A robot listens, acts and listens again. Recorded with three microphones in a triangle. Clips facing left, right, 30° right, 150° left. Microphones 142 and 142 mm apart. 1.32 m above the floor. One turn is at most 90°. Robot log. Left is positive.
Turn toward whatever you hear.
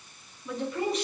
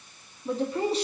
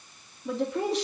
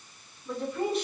note: The woman speaking: 30° right.
cmd yaw -30
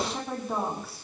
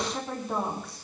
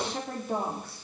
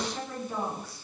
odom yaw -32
end: Found it: a woman speaking, straight ahead, 2 to 4 m away.